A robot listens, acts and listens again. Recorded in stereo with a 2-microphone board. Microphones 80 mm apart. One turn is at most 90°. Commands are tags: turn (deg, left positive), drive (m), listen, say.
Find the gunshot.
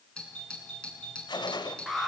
<turn deg="70"/>
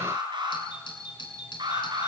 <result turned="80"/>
<listen/>
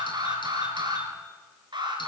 <say>I heard a gunshot, but can't make it out now. It was about 10° right or 30° left.</say>